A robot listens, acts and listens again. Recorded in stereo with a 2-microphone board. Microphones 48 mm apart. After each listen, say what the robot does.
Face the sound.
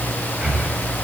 Turn 20° right.
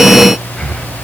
Facing the breathing.